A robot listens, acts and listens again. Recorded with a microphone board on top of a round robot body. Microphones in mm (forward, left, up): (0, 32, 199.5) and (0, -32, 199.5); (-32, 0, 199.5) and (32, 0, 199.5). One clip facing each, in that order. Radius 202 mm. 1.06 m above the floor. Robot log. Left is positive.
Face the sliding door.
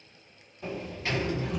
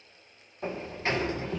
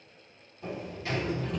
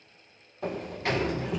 note: The sliding door: 30° right.
cmd yaw -30
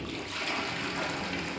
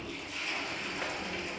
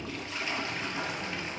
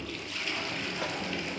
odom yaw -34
end: Facing the sliding door.